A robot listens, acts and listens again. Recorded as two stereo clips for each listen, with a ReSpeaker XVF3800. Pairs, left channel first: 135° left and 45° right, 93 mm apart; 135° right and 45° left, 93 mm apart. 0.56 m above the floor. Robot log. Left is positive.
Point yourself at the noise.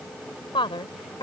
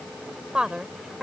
note: The woman speaking: 130° left.
cmd yaw +130
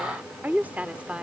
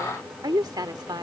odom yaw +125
note: The woman speaking is now 30° left.
cmd yaw +30
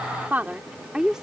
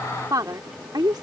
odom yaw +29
note: The woman speaking is now 35° left.
cmd yaw +35
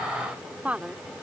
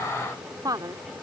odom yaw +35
note: The woman speaking is now 25° left.
cmd yaw +25
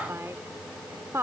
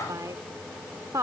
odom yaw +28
end: Found it: a woman speaking, straight ahead.